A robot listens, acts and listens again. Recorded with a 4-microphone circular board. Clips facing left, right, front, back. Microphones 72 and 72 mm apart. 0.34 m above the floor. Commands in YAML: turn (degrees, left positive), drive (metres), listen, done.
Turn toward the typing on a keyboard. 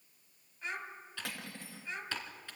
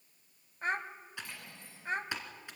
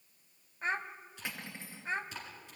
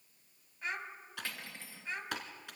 turn: -160
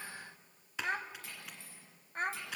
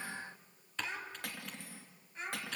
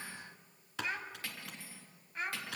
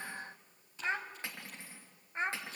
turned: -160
turn: 10
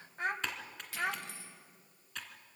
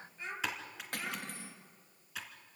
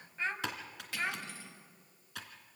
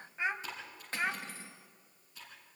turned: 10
done: "Found it: typing on a keyboard, straight ahead, 2 to 4 m away."